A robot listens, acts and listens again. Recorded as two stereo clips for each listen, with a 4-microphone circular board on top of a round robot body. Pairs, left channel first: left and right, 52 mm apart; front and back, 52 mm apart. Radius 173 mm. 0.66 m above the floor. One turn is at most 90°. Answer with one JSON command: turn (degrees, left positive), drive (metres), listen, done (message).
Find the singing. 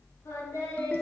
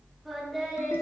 {"turn": 90}
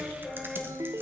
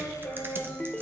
{"done": "Facing the singing."}